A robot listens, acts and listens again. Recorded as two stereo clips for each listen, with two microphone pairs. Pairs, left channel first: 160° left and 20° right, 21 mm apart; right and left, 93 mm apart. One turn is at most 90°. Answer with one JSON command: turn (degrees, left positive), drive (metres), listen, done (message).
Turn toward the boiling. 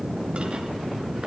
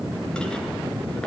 {"listen": true}
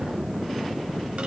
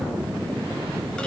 {"listen": true}
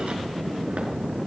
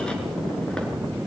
{"done": "I can't make out boiling."}